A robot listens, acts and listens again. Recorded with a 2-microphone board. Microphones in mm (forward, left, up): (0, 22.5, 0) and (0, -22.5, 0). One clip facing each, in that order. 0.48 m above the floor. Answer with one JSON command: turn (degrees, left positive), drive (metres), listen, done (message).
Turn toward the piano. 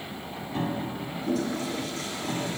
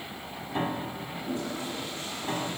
{"turn": -25}
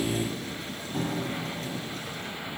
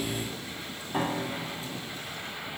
{"turn": -130}
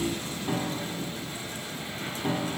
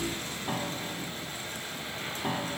{"turn": -15}
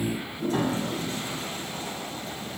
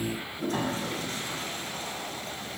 {"done": "Found it: a piano, straight ahead, 2 to 4 m away."}